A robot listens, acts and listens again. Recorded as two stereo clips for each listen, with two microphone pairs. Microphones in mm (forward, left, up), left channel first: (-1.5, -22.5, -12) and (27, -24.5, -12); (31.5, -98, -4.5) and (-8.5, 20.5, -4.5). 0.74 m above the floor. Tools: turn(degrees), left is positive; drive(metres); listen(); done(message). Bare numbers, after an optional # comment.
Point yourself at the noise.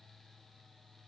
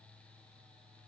listen()
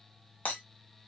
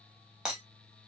# The breaking glass: 165° right.
turn(-165)
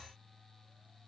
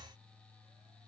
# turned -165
done("Facing where the breaking glass came from. I can't hear it now.")